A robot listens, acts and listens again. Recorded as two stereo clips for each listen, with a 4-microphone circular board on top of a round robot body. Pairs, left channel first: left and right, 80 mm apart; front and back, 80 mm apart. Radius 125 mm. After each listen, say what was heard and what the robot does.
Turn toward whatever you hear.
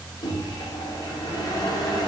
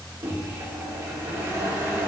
The microwave: 125° left. Turn 125° left.
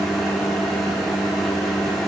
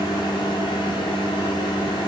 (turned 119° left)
Facing the microwave, under 1 m away.